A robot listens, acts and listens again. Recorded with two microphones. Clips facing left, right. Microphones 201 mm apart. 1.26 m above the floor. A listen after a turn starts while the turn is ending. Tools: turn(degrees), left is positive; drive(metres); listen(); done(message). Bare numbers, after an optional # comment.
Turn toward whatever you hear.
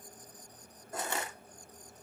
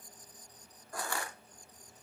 # The crushing: about 20° left or 160° left.
turn(20)
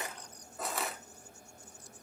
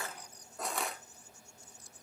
done("Facing the crushing, 1 to 2 m away.")